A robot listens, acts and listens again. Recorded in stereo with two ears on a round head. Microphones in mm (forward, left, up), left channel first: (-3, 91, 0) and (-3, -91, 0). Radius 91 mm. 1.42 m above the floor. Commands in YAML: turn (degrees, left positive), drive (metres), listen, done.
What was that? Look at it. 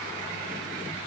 listen: true
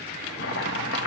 turn: 60
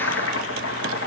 turn: 60
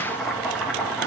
done: "Found it: chopping, straight ahead."